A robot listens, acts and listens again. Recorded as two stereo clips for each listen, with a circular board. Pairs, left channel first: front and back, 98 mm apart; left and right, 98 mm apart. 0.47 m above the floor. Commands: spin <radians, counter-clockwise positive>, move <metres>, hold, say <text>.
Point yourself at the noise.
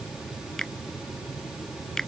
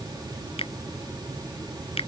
spin 1.48
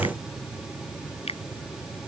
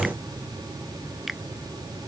say Facing the finger snap.